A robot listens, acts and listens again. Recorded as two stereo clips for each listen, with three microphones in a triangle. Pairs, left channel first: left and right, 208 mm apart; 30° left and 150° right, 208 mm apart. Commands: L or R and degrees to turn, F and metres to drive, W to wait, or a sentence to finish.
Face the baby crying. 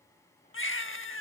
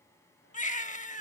L80
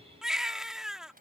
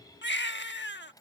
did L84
Found it: a baby crying, straight ahead.